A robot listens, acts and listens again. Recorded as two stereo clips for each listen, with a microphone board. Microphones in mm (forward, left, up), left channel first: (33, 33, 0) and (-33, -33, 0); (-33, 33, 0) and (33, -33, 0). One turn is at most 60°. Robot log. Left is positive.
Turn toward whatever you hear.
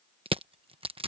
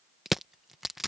note: The crushing: 130° right.
cmd yaw -60
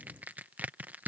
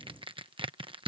note: The crushing is now 65° right.
cmd yaw -60
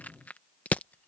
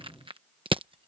note: The crushing is now 30° right.
cmd yaw -30
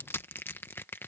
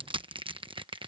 note: The crushing is now 20° right.
cmd yaw -20
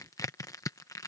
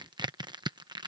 end: Facing the crushing.